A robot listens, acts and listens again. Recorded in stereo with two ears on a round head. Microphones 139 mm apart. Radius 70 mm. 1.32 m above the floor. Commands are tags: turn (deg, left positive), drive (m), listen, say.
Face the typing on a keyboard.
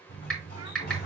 <turn deg="30"/>
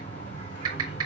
<turn deg="-30"/>
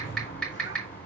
<say>Found it: typing on a keyboard, straight ahead, 2 to 4 m away.</say>